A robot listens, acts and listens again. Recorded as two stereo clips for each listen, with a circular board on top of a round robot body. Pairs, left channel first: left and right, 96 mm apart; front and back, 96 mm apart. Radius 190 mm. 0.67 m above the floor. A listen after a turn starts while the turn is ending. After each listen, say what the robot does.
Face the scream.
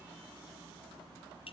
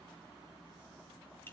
Keep listening.
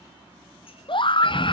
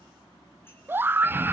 Turn 115° left.
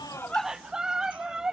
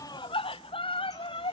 Found it: a scream, straight ahead, under 1 m away.